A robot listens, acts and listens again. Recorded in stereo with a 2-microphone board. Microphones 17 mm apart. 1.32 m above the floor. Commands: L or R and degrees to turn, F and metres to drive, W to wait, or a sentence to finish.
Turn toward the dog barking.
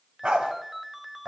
R90
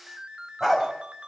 Found it: a dog barking, straight ahead.